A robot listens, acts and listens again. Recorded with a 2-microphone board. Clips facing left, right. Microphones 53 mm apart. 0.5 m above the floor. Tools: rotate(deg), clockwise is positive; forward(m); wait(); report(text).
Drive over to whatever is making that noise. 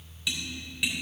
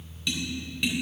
rotate(-30)
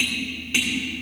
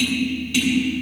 rotate(-145)
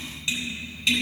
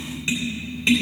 rotate(30)
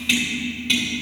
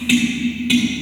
forward(1.0)
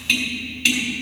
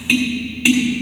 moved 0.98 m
rotate(15)
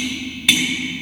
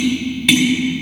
forward(1.0)
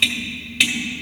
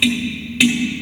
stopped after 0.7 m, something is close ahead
report("I am next to the tapping.")